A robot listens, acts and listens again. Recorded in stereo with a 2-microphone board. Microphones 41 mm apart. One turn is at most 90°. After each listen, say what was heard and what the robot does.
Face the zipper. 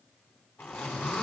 The zipper: about 65° left or 115° left. Turn 65° left.
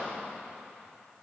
Keep listening.
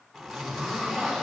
Facing the zipper.